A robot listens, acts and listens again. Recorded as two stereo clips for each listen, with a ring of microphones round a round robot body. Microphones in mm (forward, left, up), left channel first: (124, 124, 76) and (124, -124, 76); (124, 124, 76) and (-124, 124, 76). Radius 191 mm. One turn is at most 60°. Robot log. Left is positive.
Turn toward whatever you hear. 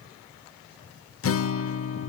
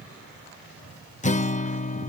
note: The guitar: 60° left.
cmd yaw +60
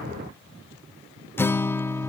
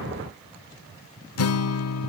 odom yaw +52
note: The guitar is now 10° left.
cmd yaw +10
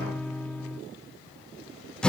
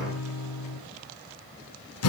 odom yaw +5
end: Facing the guitar, under 1 m away.